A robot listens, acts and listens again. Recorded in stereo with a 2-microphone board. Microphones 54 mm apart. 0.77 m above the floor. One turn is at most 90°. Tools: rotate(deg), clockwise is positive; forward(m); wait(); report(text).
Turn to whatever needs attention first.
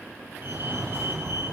rotate(45)
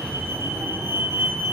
rotate(85)
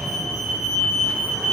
rotate(10)
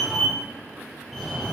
report("Found it: a fire alarm, straight ahead.")